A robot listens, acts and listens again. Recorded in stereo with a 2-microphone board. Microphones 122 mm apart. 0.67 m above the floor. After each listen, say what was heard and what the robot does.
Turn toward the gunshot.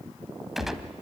Turn 30° right.
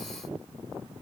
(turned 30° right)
Keep listening.
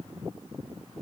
I heard a gunshot, but can't make it out now. It was about 25° left or 145° right.